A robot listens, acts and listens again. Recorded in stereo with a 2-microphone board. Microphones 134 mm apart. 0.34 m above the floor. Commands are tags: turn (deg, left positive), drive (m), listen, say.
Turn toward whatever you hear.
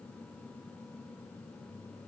<listen/>
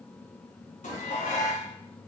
<turn deg="70"/>
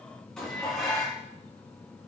<say>Facing the dishes clattering, 2 to 4 m away.</say>